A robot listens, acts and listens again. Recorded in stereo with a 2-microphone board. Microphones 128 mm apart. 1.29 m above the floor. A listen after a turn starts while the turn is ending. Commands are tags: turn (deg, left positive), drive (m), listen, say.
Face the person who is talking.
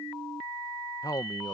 <turn deg="30"/>
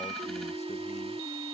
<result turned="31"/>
<listen/>
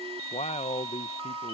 <turn deg="120"/>
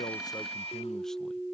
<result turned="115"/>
<listen/>
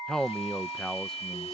<say>Facing the man speaking.</say>